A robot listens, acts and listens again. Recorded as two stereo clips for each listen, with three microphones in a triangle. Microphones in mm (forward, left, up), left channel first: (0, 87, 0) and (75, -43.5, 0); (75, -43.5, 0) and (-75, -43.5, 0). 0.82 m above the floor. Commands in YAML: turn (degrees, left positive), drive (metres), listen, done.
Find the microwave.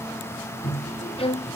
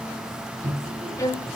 turn: 145
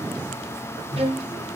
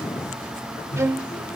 turn: -30
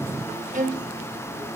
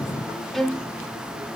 listen: true
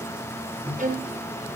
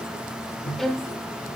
turn: -10
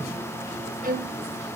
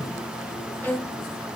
listen: true
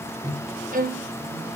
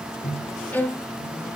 done: "Found it: a microwave, straight ahead, over 4 m away."